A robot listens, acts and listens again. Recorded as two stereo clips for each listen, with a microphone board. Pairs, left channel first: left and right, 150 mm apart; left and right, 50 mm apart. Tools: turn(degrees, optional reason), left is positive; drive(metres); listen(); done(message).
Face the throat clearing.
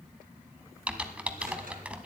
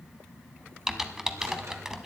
listen()
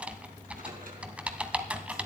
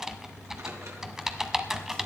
listen()
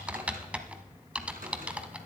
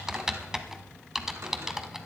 done("I can't make out throat clearing to turn to.")